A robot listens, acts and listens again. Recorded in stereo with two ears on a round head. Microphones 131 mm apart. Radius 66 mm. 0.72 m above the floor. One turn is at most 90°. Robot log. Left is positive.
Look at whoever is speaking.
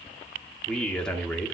cmd yaw +30
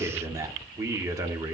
note: So it is at 25° right.
cmd yaw -25
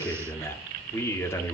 note: The man speaking is now 20° left.
cmd yaw +20
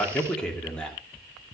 note: The man speaking is now 10° left.
cmd yaw +10
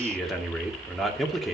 end: Found it: a man speaking, straight ahead.